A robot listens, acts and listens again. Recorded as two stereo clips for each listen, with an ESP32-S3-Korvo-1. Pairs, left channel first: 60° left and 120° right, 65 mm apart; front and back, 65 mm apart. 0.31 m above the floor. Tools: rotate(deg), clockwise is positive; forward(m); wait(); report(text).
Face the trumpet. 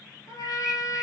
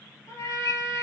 rotate(-35)
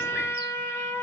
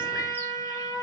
rotate(-15)
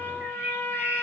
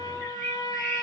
report("Facing the trumpet, under 1 m away.")